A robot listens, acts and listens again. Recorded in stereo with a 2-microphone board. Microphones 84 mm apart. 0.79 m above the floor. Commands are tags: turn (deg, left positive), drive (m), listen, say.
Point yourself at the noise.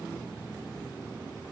<listen/>
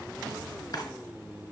<turn deg="60"/>
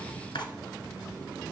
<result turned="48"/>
<turn deg="70"/>
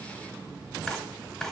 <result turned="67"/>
<say>Facing the drawer.</say>